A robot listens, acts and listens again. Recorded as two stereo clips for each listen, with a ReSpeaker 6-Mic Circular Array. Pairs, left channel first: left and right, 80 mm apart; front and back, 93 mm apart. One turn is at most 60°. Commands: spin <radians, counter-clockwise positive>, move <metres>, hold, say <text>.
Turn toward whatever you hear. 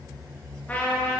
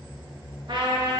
spin 1.05
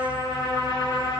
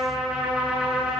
spin 1.05
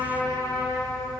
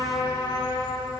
spin 0.70
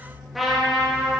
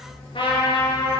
say Facing the trumpet.